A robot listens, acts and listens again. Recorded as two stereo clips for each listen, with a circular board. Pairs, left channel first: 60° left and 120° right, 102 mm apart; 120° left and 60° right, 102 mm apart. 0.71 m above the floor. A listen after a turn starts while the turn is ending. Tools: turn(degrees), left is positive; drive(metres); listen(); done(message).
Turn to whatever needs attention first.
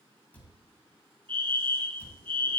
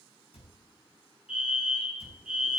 turn(degrees=-140)
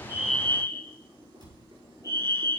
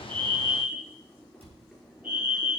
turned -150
turn(degrees=10)
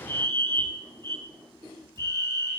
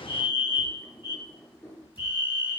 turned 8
done("Facing the fire alarm, over 4 m away.")